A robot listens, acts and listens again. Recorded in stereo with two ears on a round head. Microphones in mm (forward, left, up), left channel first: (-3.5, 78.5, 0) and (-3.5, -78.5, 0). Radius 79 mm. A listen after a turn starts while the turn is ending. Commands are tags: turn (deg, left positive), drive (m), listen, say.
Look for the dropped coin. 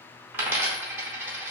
<turn deg="-30"/>
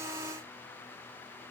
<listen/>
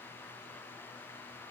<say>I heard a dropped coin, but can't make it out now. It was about 15° left or 135° right.</say>